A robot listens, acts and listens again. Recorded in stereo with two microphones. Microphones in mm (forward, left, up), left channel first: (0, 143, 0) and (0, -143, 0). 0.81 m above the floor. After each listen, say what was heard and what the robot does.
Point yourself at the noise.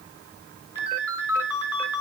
Turn 90° left.
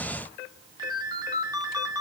So it is at 15° right. Turn 15° right.
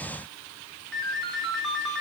Found it: a ringtone, straight ahead.